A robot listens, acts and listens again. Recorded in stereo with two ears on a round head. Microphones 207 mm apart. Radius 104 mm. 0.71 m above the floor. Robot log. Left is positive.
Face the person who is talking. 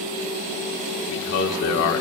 note: The man speaking: about 65° left or 115° left.
cmd yaw +65
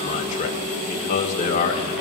note: So it is at 35° left.
cmd yaw +35
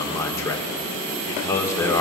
note: The man speaking is now 15° left.
cmd yaw +15
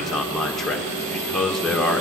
end: Found it: a man speaking, straight ahead.